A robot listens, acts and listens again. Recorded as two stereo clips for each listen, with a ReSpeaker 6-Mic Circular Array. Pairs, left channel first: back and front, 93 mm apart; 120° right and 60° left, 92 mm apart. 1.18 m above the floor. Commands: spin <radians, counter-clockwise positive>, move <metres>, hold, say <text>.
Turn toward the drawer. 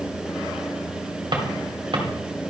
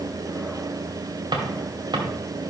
spin 0.44
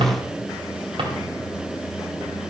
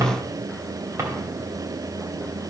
say Facing the drawer, 2 to 4 m away.